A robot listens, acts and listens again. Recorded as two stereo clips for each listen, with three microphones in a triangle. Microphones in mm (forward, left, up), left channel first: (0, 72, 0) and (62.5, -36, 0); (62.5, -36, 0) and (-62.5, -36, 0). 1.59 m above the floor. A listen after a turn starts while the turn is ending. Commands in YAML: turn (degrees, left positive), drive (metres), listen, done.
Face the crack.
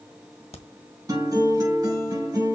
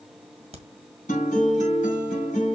turn: 150
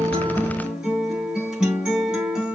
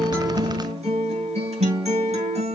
done: "Facing where the crack came from. I can't hear it now."